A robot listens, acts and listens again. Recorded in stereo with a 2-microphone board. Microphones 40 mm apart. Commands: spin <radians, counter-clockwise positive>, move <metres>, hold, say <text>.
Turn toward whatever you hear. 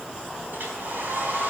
spin -0.87
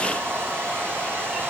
spin -1.31
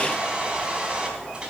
spin -0.35
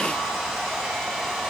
say Facing the hair dryer.